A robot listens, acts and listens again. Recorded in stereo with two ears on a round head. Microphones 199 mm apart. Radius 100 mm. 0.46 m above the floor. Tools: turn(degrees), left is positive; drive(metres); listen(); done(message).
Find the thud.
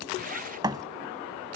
turn(degrees=-20)
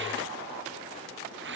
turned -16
listen()
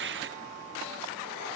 done("I heard a thud, but can't make it out now. It was about 5° right or 145° right.")